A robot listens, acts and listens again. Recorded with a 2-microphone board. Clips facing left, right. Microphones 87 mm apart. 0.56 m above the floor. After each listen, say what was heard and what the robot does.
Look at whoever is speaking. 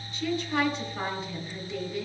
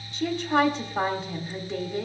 The woman speaking: about 60° right or 120° right. Turn 60° right.
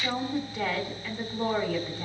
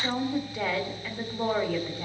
So it is at 20° right. Turn 20° right.
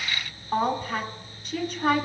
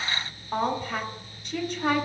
Found it: a woman speaking, straight ahead, 1 to 2 m away.